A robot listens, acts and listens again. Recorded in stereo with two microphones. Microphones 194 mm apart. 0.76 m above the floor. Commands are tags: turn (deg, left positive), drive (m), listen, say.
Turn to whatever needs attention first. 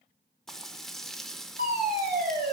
<turn deg="-55"/>
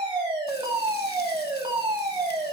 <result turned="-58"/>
<turn deg="-30"/>
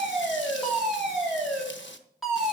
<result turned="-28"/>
<say>Found it: a fire alarm, straight ahead.</say>